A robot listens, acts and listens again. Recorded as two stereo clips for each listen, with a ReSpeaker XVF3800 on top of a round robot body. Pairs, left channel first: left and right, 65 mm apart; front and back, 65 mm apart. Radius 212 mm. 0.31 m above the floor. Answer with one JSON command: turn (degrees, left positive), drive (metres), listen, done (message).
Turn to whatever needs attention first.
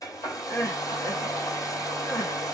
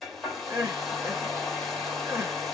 {"turn": 125}
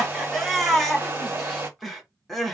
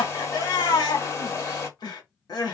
{"done": "Facing the crying, 1 to 2 m away."}